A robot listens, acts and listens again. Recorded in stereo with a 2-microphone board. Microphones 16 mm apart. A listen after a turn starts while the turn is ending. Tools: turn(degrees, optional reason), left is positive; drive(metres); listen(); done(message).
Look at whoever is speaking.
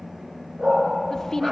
turn(degrees=30, reason="The woman speaking: about 30° left or 150° left.")
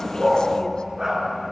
listen()
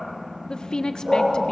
turn(degrees=120, reason="So it is at 120° left.")
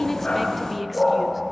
listen()
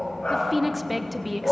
done("Facing the woman speaking.")